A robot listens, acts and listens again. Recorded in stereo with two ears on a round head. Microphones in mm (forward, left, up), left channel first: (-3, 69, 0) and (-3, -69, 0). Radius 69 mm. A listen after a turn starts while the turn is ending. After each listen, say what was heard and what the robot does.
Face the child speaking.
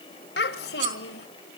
The child speaking: about 75° left or 105° left. Turn 75° left.
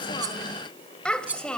Facing the child speaking, 1 to 2 m away.